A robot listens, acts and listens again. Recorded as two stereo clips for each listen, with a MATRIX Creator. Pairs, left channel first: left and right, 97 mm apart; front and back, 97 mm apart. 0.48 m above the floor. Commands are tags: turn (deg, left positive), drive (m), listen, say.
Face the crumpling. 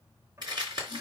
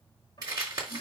<turn deg="-130"/>
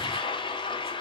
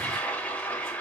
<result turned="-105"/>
<turn deg="-25"/>
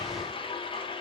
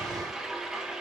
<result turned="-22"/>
<listen/>
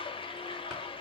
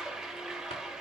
<say>Facing where the crumpling came from. I can't hear it now.</say>